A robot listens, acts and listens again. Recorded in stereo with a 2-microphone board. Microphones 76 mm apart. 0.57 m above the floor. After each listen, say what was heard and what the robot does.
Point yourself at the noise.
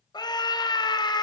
The scream: about 70° left or 110° left. Turn 70° left.
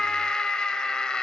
So it is at 10° left. Turn 10° left.
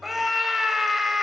Facing the scream, 2 to 4 m away.